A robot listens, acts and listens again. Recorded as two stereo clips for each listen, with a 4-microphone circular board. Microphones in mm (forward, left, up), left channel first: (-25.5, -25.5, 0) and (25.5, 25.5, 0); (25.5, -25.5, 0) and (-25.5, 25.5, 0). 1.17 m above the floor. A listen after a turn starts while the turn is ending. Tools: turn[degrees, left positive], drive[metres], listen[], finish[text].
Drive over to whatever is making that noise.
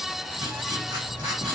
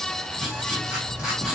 Thought: The writing: 50° left.
Action: turn[50]
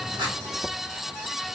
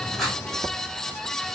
Action: listen[]
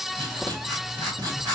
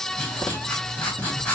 Thought: The writing is now 20° left.
Action: turn[20]
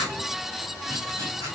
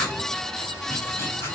Action: drive[1.0]
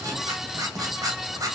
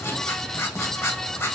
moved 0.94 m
Action: drive[1.0]
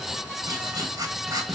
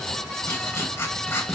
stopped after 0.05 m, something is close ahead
Action: finish[I am next to the writing.]